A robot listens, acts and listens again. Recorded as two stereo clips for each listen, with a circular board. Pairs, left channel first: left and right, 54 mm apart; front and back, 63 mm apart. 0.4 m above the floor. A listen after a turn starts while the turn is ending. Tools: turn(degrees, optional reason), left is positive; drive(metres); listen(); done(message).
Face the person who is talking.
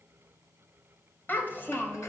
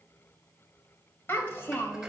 turn(degrees=45, reason="The child speaking: 45° left.")
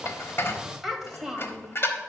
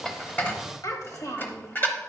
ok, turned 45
done("Found it: a child speaking, straight ahead, 1 to 2 m away.")